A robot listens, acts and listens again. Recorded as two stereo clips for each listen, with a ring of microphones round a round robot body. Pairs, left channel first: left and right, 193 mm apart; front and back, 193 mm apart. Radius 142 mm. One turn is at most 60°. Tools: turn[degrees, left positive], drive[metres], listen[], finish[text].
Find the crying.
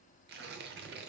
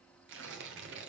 Action: listen[]
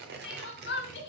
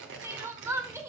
Thought: The crying: 105° left.
Action: turn[60]
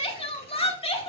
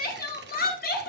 Thought: The crying is now 35° left.
Action: turn[35]
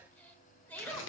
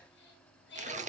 Thought: The crying is now 10° left.
Action: turn[10]
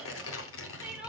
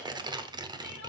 Action: listen[]
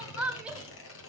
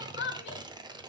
Action: finish[Found it: crying, straight ahead, 1 to 2 m away.]